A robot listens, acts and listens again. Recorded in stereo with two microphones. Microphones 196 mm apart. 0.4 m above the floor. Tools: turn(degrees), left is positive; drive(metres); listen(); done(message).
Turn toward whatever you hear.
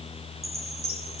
turn(degrees=-55)
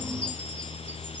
listen()
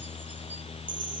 listen()
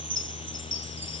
turn(degrees=-75)
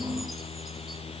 listen()
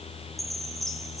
done("Found it: a chime, straight ahead.")